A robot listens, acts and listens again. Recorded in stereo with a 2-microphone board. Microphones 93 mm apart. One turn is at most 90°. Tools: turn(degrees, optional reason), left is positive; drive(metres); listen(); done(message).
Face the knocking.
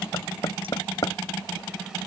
turn(degrees=45, reason="The knocking: about 45° left or 135° left.")
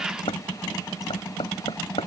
turn(degrees=90, reason="So it is at 90° left.")
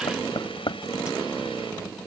turn(degrees=55, reason="The knocking is now 55° left.")
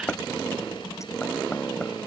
turn(degrees=10, reason="The knocking is now 10° left.")
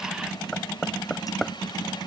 done("Facing the knocking.")